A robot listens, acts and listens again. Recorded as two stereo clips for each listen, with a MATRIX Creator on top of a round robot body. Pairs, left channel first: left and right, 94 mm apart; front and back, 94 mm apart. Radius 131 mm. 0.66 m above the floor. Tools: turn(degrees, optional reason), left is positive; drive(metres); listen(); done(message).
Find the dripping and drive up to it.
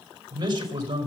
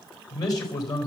listen()
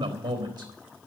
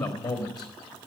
listen()
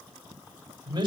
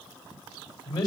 done("I can't make out dripping, only a man speaking.")